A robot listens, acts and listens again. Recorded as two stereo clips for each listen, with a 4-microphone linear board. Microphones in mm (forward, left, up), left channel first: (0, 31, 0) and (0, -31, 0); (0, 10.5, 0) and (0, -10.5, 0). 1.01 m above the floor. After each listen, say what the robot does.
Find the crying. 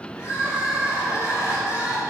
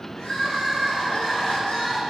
Turn 50° left.
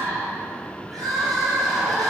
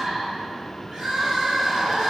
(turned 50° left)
Found it: crying, straight ahead, over 4 m away.